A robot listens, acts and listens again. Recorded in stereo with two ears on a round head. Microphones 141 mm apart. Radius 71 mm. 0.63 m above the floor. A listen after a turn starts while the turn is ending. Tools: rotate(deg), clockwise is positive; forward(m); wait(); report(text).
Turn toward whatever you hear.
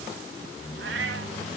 rotate(90)
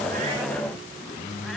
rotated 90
wait()
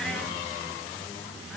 wait()
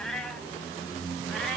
report("Facing the cat meowing.")